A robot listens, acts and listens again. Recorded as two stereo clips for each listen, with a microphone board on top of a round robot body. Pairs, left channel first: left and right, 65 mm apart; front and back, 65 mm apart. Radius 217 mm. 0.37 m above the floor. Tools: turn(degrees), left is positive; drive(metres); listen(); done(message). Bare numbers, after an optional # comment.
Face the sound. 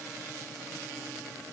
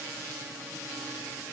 listen()
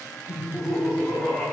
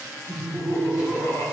done("Facing the laughter.")